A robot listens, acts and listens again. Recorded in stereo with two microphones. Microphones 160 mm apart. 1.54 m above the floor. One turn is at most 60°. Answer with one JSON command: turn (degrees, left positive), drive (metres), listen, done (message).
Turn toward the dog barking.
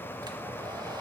{"listen": true}
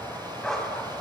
{"turn": 30}
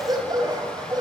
{"turn": -25}
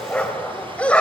{"turn": 10}
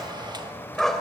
{"done": "Facing the dog barking."}